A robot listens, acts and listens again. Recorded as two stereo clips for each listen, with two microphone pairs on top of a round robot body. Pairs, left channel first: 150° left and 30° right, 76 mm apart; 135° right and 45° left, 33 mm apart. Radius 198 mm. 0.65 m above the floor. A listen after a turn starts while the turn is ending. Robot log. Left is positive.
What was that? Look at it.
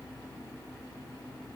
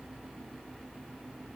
cmd idle
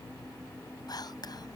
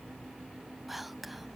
note: The whispering: 130° left.
cmd yaw +130
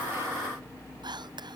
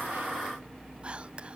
note: The whispering is now 10° right.
cmd yaw -10
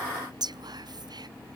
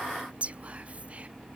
end: Found it: whispering, straight ahead.